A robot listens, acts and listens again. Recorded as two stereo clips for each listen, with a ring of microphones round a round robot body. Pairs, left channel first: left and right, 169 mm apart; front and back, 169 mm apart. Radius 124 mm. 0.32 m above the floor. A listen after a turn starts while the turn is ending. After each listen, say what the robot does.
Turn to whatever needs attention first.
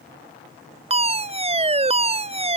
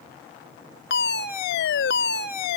Turn 40° right.
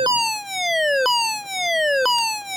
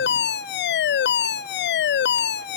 Facing the fire alarm.